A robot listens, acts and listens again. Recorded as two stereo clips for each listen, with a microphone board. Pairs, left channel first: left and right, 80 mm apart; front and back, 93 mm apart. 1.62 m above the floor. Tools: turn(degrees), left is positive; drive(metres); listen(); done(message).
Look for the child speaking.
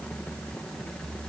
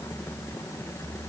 listen()
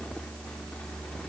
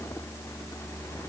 listen()
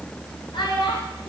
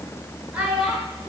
turn(degrees=100)
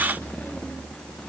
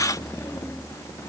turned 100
listen()
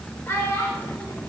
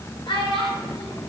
turn(degrees=30)
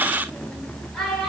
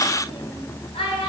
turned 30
done("Facing the child speaking, over 4 m away.")